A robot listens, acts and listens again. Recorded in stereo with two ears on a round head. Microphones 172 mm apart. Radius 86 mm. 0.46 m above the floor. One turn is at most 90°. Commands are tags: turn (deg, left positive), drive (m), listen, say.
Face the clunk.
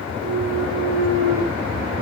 <turn deg="-90"/>
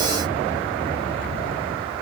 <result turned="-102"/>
<turn deg="10"/>
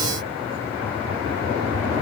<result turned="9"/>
<say>Facing where the clunk came from. I can't hear it now.</say>